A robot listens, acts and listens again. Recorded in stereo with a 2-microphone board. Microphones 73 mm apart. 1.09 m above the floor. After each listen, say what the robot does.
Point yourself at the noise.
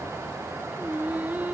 Turn 20° right.
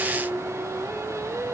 Turn 140° right.
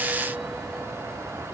Keep listening.
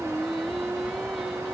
Facing the singing.